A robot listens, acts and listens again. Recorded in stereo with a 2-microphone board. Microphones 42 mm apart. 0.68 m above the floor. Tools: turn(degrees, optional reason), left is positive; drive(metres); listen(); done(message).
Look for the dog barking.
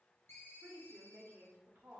listen()
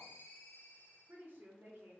listen()
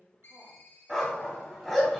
turn(degrees=30)
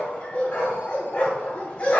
turn(degrees=150, reason="So it is at 150° left.")
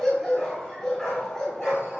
turn(degrees=15, reason="The dog barking is now 15° left.")
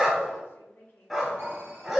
done("Facing the dog barking.")